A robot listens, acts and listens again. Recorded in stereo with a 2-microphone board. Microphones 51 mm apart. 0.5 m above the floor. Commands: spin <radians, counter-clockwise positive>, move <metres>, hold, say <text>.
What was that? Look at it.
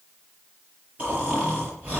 spin -0.44
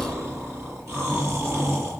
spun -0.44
spin -2.18
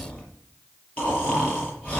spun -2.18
spin 0.35
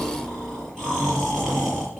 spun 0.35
say Found it: snoring, straight ahead, over 4 m away.